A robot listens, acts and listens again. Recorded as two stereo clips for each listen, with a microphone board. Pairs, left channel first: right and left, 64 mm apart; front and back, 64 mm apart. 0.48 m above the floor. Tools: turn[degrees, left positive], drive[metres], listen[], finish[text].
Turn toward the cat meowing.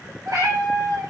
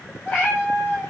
Thought: The cat meowing: 65° left.
Action: turn[65]
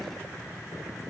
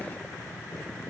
Action: listen[]
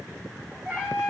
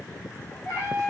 Thought: The cat meowing is now 15° left.
Action: turn[15]
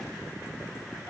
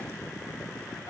Action: listen[]
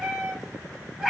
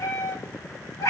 Thought: The cat meowing is now 10° left.
Action: turn[10]
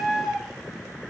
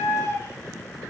Action: finish[Facing the cat meowing.]